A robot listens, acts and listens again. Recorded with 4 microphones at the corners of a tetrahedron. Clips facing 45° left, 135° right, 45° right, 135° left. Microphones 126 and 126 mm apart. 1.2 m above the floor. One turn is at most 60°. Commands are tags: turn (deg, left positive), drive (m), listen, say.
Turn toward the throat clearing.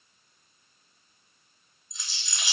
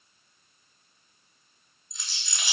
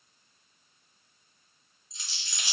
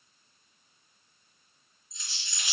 <listen/>
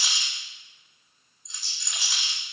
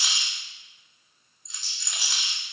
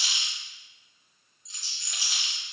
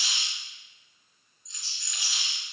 <listen/>
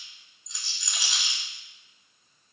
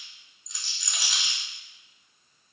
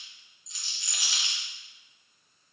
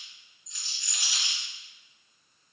<say>I can't make out throat clearing, only a rattle.</say>